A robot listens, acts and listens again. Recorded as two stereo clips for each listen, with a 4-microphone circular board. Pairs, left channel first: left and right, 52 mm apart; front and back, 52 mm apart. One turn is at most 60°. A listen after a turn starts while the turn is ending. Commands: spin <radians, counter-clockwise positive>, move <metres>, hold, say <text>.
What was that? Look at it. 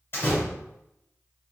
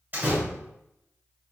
spin 1.05
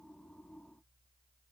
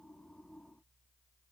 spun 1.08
spin 1.05
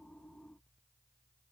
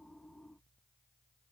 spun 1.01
spin 0.17
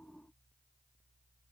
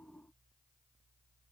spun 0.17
say Facing where the door slam came from. I can't hear it now.